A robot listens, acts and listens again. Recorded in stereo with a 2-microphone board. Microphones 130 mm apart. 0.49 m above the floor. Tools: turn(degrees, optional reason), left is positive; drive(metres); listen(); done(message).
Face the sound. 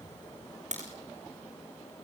turn(degrees=-65, reason="The crack: about 65° right or 115° right.")
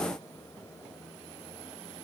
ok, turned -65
listen()
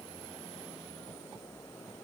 done("I heard a crack, but can't make it out now. It was about straight ahead or 50° right.")